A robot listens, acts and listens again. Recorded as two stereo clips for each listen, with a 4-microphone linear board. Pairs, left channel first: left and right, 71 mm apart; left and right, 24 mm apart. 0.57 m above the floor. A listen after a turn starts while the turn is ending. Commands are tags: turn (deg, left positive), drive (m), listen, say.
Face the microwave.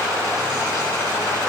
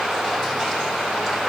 <listen/>
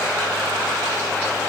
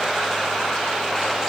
<listen/>
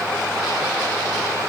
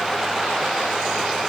<say>I can't make out a microwave.</say>